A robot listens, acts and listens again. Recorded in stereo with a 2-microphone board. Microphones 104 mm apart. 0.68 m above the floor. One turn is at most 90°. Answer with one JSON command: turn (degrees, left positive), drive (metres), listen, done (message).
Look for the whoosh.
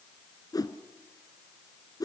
{"turn": 40}
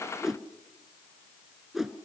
{"done": "Found it: a whoosh, straight ahead."}